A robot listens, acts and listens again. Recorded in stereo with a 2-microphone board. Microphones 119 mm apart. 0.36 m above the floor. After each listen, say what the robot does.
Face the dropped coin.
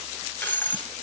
Turn 30° left.
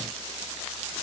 Keep listening.
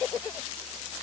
I heard a dropped coin, but can't make it out now. It was about 15° right or 135° left.